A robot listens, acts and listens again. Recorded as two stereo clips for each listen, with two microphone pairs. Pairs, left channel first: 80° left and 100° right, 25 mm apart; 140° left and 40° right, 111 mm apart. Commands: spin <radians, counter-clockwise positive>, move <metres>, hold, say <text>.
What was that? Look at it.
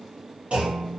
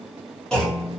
spin -2.36
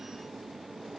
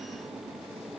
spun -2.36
say Facing where the clunk came from. I can't hear it now.